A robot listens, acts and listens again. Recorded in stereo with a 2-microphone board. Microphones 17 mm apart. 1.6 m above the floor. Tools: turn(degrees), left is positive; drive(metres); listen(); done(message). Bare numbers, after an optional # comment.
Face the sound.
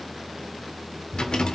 # The rattle: about 75° left or 105° left.
turn(75)
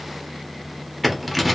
done("Found it: a rattle, straight ahead, under 1 m away.")